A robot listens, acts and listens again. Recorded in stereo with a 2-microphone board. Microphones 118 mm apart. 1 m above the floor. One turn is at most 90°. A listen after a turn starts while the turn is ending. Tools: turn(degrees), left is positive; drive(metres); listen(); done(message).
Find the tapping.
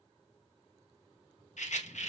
listen()
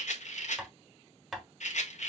turn(degrees=-30)
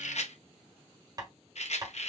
turn(degrees=-90)
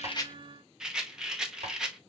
turn(degrees=-55)
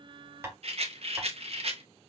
turn(degrees=-20)
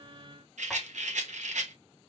listen()
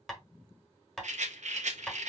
done("Facing the tapping.")